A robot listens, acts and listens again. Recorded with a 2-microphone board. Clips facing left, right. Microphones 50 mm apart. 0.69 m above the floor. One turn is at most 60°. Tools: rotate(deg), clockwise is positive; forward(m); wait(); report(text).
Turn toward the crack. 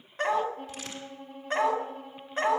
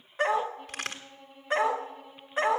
rotate(60)
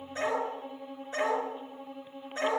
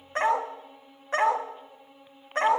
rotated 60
wait()
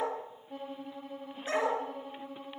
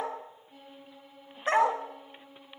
report("I heard a crack, but can't make it out now. It was about straight ahead or 60° right.")